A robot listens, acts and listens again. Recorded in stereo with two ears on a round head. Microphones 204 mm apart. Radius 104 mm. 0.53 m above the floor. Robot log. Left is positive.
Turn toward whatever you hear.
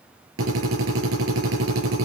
note: The drill: about 70° right or 110° right.
cmd yaw -70
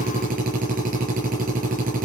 note: So it is at 35° right.
cmd yaw -35
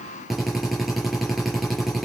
end: Facing the drill, over 4 m away.